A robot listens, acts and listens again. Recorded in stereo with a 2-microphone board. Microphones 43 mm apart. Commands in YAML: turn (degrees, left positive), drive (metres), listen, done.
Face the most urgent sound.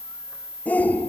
turn: 40
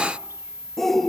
done: "Found it: a shout, straight ahead, 1 to 2 m away."